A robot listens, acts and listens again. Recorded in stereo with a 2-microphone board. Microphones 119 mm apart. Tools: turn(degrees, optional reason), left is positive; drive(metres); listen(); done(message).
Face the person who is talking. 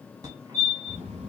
turn(degrees=-55, reason="The child speaking: about 55° right or 125° right.")
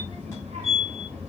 turn(degrees=-65, reason="So it is at 65° right.")
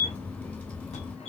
turn(degrees=10, reason="The child speaking is now 10° left.")
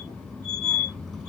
done("Facing the child speaking, 2 to 4 m away.")